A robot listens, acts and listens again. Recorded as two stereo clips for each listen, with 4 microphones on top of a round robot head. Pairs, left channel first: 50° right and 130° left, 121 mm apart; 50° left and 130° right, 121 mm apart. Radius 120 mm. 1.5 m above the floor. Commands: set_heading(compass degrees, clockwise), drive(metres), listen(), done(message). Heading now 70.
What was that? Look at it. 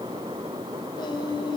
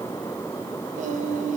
set_heading(180)
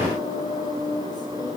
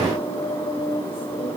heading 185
done("Facing the singing.")